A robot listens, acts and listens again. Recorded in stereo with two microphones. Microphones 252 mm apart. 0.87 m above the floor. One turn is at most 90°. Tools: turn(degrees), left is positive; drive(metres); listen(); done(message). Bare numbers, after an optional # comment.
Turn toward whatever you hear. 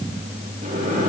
# The microwave: about 30° right or 150° right.
turn(-30)
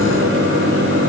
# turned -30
# So it is at 120° right.
turn(-90)
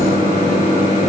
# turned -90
# The microwave is now 30° right.
turn(-30)
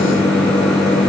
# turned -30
done("Facing the microwave.")